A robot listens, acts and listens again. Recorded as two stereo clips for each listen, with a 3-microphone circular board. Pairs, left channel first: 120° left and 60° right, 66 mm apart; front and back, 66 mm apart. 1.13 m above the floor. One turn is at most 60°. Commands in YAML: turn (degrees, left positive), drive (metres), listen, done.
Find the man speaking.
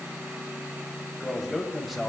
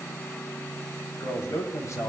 turn: 30
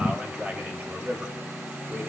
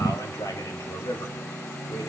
done: "Found it: a man speaking, straight ahead, 2 to 4 m away."